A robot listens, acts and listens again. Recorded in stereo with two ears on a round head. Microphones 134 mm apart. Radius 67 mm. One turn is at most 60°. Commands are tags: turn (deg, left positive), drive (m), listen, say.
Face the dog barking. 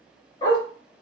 <turn deg="35"/>
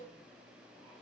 <listen/>
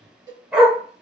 <say>Facing the dog barking.</say>